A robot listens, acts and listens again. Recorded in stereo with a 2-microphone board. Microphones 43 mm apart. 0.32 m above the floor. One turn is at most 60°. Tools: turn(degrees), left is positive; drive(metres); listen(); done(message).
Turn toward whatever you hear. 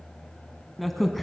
turn(degrees=30)
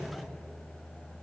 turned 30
listen()
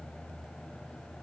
done("I heard a crack, but can't make it out now. It was about 30° right or 150° left.")